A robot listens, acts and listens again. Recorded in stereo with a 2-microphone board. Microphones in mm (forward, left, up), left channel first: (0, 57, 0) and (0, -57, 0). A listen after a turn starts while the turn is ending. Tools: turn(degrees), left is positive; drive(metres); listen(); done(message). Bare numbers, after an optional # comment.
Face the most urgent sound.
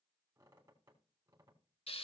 listen()
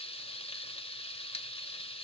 listen()
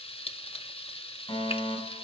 # The fire alarm: about 40° left or 140° left.
turn(40)
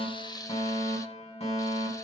# So it is at 95° left.
turn(95)
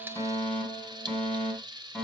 # The fire alarm is now 10° left.
turn(10)
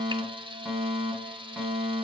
done("Facing the fire alarm, over 4 m away.")